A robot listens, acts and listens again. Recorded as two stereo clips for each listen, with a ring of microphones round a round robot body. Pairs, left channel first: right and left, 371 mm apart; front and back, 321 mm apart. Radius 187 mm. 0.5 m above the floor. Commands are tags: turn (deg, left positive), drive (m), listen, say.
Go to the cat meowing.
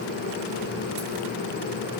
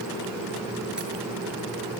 <listen/>
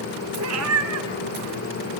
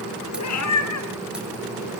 <turn deg="40"/>
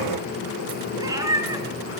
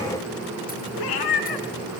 <turn deg="10"/>
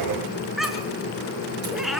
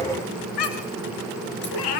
<drive m="1.0"/>
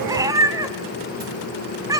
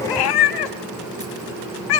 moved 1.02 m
<turn deg="10"/>
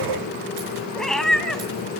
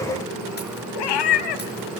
<drive m="1.0"/>
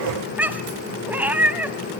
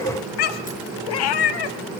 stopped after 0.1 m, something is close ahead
<say>Arrived at the cat meowing, straight ahead.</say>